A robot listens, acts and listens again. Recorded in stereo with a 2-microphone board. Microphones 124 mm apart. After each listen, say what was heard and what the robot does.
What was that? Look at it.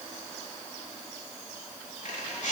Turn 90° left.
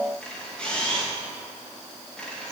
Facing the camera shutter.